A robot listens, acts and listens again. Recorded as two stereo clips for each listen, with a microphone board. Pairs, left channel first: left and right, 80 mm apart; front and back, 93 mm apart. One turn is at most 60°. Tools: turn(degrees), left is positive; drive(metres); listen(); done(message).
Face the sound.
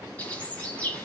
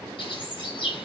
turn(degrees=20)
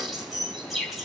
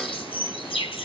done("Facing the bird, 2 to 4 m away.")